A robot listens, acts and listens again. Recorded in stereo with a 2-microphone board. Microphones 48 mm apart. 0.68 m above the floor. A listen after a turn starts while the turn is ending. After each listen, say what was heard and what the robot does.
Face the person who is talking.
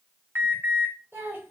The child speaking: about 55° right or 125° right. Turn 55° right.
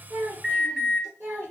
So it is at 45° right. Turn 45° right.
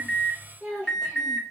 The child speaking is now 10° right. Turn 10° right.
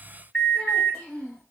The child speaking is now 20° left. Turn 20° left.
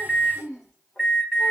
The child speaking is now 10° left. Turn 10° left.
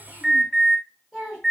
Facing the child speaking.